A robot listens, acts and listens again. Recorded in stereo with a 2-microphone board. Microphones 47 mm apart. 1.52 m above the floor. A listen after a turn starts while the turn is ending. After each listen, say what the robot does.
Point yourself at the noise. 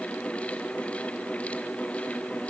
Keep listening.
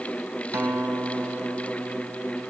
Turn 60° right.
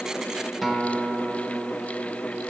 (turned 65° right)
Found it: a guitar, straight ahead.